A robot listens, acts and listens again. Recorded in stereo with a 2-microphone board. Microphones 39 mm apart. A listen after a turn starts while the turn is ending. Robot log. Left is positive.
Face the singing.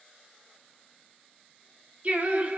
note: The singing: about 45° right or 135° right.
cmd yaw -45
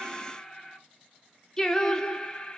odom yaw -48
note: So it is at 20° left.
cmd yaw +20
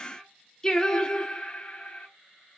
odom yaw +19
note: The singing is now 30° left.
cmd yaw +30
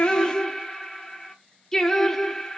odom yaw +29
note: The singing is now 10° left.
cmd yaw +10
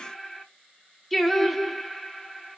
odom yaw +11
end: Found it: singing, straight ahead.